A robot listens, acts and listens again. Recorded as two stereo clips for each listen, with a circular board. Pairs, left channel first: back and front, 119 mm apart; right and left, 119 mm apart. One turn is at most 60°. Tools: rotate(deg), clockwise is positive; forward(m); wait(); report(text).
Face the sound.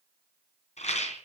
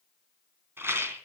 rotate(-60)
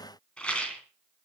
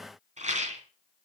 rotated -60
rotate(-60)
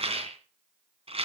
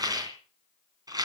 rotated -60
rotate(-35)
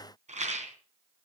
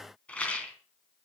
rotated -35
rotate(10)
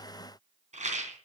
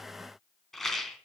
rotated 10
report("Facing the rattle.")